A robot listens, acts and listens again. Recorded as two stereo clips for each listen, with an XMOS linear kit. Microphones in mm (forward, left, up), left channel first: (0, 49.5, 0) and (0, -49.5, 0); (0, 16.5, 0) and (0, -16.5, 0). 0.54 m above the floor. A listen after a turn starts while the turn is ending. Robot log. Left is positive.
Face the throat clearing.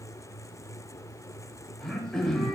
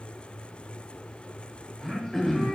cmd yaw +30
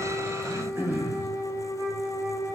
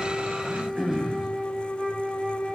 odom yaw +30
note: So it is at 20° right.
cmd yaw -20
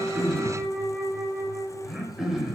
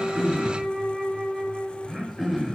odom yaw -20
end: Found it: throat clearing, straight ahead.